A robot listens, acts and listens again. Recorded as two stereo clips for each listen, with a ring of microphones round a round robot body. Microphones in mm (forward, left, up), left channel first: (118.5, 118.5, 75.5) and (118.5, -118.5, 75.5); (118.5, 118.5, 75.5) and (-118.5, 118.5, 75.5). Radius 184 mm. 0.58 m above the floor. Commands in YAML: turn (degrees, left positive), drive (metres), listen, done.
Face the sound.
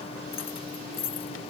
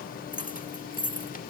turn: 55
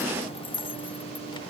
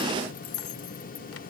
turn: 20
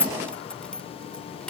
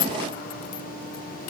done: "Found it: keys jangling, straight ahead."